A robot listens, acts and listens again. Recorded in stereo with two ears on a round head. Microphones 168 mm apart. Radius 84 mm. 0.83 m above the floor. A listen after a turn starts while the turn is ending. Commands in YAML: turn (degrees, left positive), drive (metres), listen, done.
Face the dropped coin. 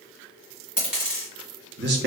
turn: -30
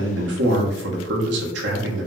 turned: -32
listen: true
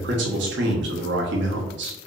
done: "I heard a dropped coin, but can't make it out now. It was about 25° left or 145° right."